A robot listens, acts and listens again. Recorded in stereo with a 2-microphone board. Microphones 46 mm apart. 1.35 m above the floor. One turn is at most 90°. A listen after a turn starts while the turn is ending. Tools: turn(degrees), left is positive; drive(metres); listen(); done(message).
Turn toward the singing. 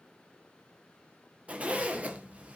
listen()
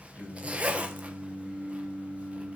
turn(degrees=65)
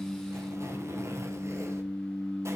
turn(degrees=10)
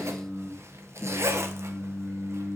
done("Facing the singing.")